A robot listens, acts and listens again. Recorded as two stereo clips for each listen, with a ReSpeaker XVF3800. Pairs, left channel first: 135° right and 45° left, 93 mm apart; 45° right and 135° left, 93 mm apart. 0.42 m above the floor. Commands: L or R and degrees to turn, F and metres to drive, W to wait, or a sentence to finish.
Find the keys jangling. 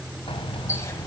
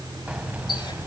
R155
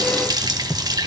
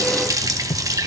R20
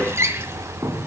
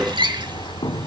R15
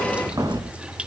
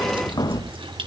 Facing the keys jangling.